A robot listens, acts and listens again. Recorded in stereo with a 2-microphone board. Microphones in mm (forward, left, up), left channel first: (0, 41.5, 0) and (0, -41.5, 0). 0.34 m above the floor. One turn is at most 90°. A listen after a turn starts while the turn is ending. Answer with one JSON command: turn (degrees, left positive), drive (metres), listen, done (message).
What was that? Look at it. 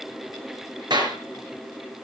{"turn": -60}
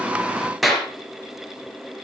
{"done": "Found it: a clap, straight ahead."}